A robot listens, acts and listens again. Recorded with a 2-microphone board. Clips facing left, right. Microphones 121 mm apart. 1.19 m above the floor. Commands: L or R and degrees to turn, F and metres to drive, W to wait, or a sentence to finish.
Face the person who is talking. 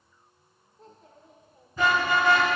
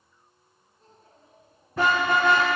L90
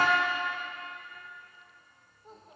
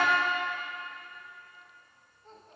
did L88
L10
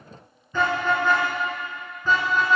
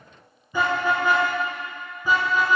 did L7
Facing the child speaking.